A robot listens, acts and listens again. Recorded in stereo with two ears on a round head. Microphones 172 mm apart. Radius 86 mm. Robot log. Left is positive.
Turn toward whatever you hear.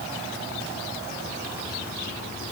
cmd idle
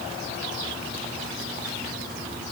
cmd idle
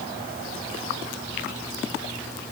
end: I can't make out anything to turn to.